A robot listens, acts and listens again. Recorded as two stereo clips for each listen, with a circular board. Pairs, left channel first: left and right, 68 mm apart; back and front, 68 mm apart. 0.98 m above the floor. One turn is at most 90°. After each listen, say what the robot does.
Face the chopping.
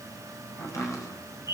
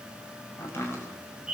Turn 90° left.
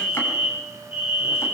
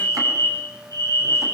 Turn 40° left.
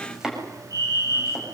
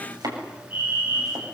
Turn 10° right.
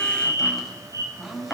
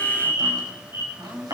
Facing the chopping.